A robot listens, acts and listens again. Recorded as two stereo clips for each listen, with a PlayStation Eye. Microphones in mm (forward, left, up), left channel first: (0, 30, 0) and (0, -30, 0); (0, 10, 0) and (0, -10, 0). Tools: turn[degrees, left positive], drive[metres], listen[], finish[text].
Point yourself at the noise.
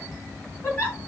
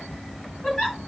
Thought: The giggle: about 30° left or 150° left.
Action: turn[30]
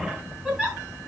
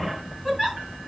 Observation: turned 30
Action: finish[Found it: a giggle, straight ahead.]